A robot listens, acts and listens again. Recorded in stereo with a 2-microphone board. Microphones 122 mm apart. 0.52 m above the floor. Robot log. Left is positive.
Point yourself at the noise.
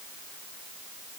cmd idle
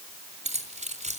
cmd yaw -90
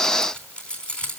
note: So it is at 10° left.
cmd yaw +10
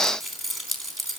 end: Found it: keys jangling, straight ahead.